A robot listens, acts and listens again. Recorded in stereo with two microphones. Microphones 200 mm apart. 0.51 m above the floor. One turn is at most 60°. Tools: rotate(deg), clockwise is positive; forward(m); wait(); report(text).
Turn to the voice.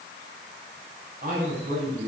rotate(50)
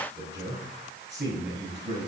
rotate(60)
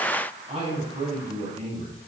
rotate(35)
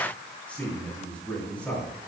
report("Found it: a man speaking, straight ahead.")